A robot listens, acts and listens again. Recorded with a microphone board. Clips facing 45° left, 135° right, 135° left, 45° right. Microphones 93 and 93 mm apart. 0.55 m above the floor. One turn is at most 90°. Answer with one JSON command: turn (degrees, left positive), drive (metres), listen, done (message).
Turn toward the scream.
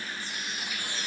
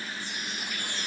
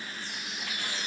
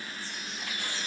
{"listen": true}
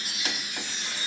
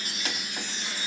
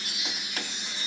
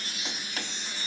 {"listen": true}
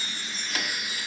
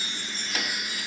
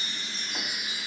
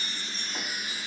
{"done": "I can't make out a scream, only a chime."}